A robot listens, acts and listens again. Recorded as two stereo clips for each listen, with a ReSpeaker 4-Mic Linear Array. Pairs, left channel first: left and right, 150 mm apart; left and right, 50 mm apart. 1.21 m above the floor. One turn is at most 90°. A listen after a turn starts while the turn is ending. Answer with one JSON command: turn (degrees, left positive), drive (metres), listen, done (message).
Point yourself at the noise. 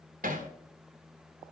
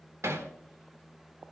{"turn": -90}
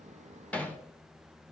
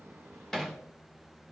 {"turn": 10}
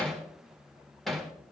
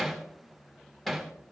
{"done": "Facing the hammering."}